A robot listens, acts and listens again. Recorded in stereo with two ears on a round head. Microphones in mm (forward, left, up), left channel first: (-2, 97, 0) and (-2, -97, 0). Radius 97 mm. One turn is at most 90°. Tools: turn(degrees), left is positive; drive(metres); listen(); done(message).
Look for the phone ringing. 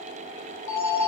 turn(degrees=55)
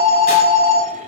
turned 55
done("Found it: a phone ringing, straight ahead.")